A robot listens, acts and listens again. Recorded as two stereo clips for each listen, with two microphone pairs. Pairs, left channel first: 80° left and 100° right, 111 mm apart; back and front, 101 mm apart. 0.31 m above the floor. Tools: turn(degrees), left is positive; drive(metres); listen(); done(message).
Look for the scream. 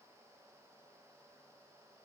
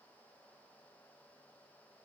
listen()
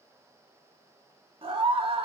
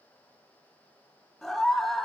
turn(degrees=-95)
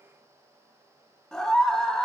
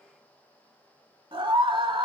done("Found it: a scream, straight ahead, 1 to 2 m away.")